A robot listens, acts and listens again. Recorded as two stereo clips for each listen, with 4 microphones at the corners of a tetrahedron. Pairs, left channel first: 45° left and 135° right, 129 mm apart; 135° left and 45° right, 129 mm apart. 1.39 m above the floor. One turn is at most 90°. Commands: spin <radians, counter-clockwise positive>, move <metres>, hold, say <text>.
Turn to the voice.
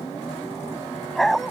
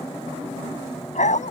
hold
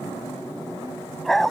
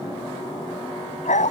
hold
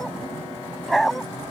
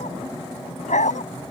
say I can't make out anyone speaking, only a dog barking.